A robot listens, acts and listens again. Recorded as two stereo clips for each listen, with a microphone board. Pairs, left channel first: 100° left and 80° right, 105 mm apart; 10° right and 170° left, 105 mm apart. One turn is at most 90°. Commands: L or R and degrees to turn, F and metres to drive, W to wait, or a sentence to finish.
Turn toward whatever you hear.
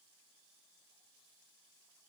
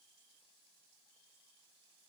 W
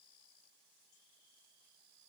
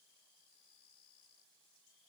W
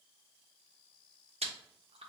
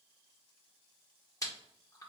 R70
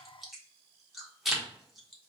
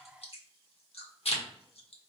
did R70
L10
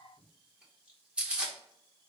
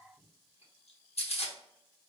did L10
Found it: chewing, straight ahead.